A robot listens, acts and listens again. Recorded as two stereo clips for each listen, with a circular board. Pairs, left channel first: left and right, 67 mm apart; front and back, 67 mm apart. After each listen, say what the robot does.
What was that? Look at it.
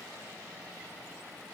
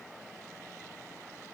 Keep listening.
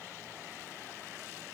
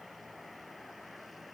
Keep listening.
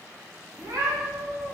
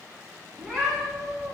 Turn 95° right.
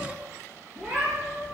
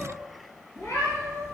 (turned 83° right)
Turn 30° right.
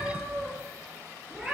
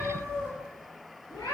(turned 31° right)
Facing the cat meowing, 2 to 4 m away.